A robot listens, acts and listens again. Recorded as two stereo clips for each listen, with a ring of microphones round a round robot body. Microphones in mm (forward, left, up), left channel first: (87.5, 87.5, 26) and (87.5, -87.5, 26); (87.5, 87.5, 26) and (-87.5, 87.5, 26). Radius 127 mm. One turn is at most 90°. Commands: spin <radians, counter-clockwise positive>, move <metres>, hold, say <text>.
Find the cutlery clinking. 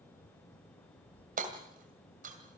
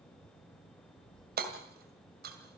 hold
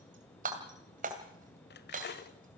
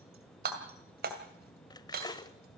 spin 1.22
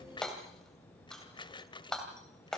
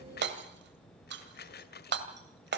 spin 0.44
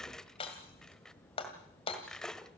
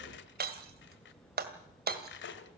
say Found it: cutlery clinking, straight ahead.